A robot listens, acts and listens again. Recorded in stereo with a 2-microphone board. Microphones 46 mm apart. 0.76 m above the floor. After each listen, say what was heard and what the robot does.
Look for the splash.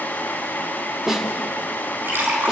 The splash: about 50° right or 130° right. Turn 50° right.
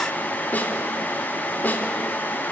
Keep listening.
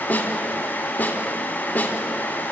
I heard a splash, but can't make it out now. It was about straight ahead or 80° right.